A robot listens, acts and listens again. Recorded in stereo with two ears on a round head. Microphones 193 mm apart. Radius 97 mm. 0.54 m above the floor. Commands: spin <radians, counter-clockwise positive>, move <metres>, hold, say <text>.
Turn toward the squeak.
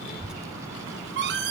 spin -1.05
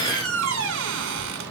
spin -1.05
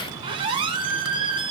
spin -0.44
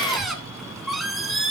say Facing the squeak, 2 to 4 m away.